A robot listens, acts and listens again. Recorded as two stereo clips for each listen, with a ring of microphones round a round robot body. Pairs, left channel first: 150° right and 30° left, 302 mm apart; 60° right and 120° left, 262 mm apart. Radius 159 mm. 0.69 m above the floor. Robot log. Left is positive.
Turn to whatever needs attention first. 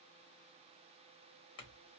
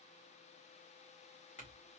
cmd idle
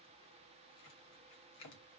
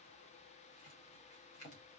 cmd idle
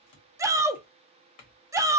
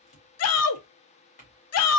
note: The shout: 50° right.
cmd yaw -50
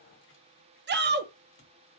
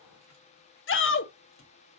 note: The shout is now 25° right.
cmd yaw -25
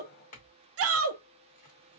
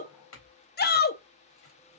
note: The shout is now 10° right.
cmd yaw -10
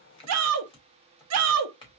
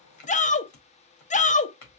end: Facing the shout, under 1 m away.